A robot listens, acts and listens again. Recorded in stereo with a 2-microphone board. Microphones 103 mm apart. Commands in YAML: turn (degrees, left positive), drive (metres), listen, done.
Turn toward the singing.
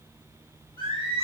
turn: -55
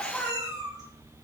done: "Found it: singing, straight ahead, over 4 m away."